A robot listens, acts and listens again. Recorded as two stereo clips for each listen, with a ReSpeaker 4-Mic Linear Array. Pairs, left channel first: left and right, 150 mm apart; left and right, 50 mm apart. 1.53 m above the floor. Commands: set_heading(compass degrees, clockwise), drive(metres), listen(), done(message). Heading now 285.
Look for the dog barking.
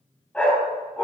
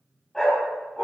set_heading(255)
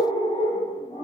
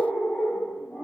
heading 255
set_heading(105)
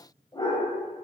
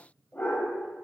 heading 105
set_heading(75)
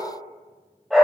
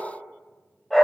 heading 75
done("Facing the dog barking.")